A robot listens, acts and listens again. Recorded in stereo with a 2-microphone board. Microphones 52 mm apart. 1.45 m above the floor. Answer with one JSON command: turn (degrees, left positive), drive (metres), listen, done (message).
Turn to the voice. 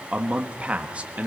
{"turn": -25}
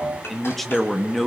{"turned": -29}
{"done": "Found it: a man speaking, straight ahead, 1 to 2 m away."}